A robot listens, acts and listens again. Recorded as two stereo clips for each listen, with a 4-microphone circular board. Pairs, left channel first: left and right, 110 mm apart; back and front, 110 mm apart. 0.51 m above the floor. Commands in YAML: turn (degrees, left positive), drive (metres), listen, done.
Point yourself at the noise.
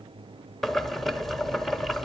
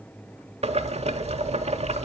done: "Found it: boiling, straight ahead."